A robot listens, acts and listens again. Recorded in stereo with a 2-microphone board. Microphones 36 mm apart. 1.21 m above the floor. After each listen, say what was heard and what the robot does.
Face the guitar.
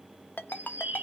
Keep listening.
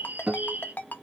The guitar: about 20° right or 160° right. Turn 20° right.
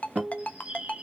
So it is at 140° right. Turn 140° right.
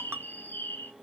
Keep listening.
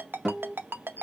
The guitar is now 10° right. Turn 10° right.
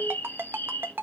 Keep listening.
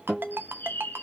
Facing the guitar.